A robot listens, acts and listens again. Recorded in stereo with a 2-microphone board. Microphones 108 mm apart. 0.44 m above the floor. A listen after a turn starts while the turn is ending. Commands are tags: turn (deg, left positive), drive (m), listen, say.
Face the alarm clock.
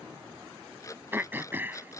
<turn deg="30"/>
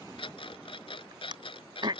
<turn deg="120"/>
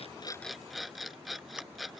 <say>Facing the alarm clock.</say>